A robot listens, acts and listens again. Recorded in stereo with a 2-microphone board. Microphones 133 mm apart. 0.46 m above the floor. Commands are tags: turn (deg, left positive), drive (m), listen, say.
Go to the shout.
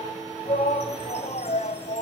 <turn deg="65"/>
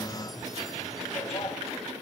<turn deg="40"/>
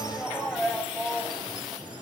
<drive m="1.0"/>
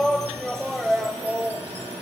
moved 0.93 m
<drive m="1.0"/>
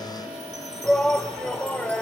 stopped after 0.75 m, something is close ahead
<turn deg="10"/>
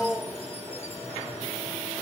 <say>I am next to the shout.</say>